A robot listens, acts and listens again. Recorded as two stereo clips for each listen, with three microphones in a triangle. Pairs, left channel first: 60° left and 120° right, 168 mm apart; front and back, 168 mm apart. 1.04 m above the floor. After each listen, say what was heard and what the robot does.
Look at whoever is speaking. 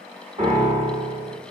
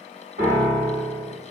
Keep listening.
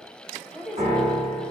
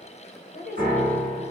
The woman speaking: 30° right. Turn 30° right.
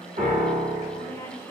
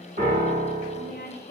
The woman speaking is now 15° right. Turn 15° right.
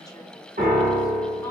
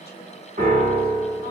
Keep listening.
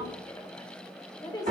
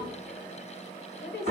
The woman speaking is now 10° right. Turn 10° right.
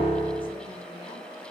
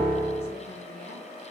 Keep listening.
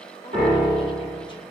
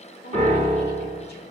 Keep listening.
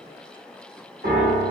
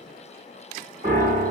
I heard a woman speaking from this way, but can't make it out now.